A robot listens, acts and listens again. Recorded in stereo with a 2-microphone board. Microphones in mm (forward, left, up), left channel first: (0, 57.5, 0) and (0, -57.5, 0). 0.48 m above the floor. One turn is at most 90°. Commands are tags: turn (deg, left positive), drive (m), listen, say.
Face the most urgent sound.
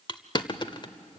<listen/>
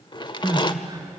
<turn deg="-30"/>
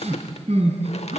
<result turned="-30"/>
<turn deg="-90"/>
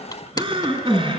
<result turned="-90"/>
<turn deg="-50"/>
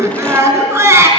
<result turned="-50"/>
<turn deg="-25"/>
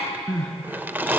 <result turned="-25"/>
<say>Found it: crying, straight ahead, 2 to 4 m away.</say>